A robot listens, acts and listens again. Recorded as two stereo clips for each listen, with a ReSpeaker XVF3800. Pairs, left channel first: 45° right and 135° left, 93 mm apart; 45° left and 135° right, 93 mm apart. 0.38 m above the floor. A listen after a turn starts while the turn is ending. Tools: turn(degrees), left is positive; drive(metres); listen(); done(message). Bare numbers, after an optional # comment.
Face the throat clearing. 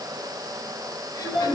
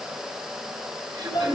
# The throat clearing: 90° right.
turn(-90)
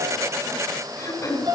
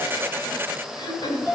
# The throat clearing is now 10° left.
turn(10)
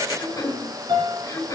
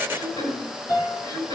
done("Found it: throat clearing, straight ahead.")